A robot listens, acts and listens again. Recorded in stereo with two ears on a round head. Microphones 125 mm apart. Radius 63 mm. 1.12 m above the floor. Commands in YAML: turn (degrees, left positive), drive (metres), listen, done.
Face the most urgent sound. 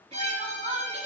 turn: -40
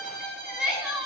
done: "Facing the crying."